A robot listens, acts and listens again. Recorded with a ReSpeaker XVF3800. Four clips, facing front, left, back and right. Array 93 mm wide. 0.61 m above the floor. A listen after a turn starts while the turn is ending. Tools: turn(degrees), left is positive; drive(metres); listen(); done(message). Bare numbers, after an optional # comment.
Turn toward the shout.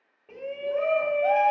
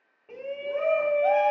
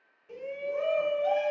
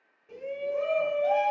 # The shout: 45° left.
turn(45)
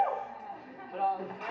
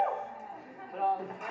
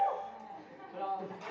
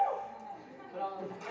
# The shout is now 35° left.
turn(35)
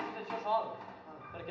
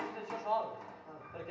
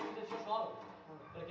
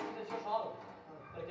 # The shout is now 20° left.
turn(20)
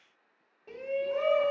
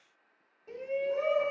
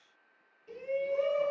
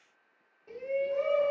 done("Facing the shout.")